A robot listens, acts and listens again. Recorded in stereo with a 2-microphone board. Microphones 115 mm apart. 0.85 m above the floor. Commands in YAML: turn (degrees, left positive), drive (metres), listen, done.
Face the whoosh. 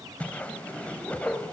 turn: 30
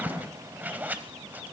turn: -15
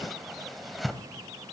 done: "Facing the whoosh."